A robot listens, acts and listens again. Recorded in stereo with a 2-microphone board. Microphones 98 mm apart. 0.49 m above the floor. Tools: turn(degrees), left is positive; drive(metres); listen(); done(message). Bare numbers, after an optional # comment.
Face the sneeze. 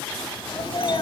# The sneeze: about 60° left or 120° left.
turn(60)
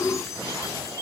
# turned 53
listen()
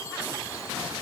done("I heard a sneeze, but can't make it out now. It was about 10° left or 65° left.")